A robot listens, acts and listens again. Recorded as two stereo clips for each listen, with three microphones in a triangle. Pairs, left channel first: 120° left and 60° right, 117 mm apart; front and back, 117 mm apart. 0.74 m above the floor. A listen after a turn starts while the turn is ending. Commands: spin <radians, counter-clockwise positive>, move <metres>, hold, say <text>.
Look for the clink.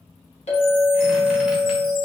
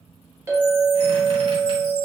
spin 2.01
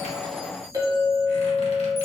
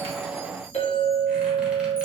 say Found it: a clink, straight ahead.